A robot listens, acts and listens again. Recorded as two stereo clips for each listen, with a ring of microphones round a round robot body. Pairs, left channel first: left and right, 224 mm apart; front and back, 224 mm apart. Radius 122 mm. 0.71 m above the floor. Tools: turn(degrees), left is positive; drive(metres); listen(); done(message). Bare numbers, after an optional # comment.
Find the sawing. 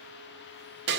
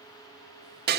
listen()
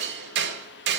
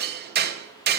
listen()
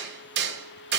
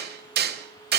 done("I can't make out sawing to turn to.")